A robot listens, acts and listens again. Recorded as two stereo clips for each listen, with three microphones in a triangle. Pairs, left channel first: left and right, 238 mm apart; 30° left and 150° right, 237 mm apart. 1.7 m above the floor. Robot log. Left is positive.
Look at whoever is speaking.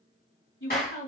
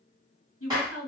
note: The woman speaking: 55° left.
cmd yaw +55
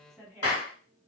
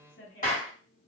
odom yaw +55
end: Facing the woman speaking.